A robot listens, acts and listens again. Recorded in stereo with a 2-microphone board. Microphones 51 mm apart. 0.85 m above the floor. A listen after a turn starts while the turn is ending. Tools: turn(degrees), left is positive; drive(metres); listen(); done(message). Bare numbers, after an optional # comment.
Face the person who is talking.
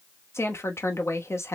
# The woman speaking: about 60° left or 120° left.
turn(60)
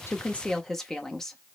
# So it is at 10° left.
turn(10)
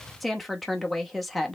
done("Found it: a woman speaking, straight ahead.")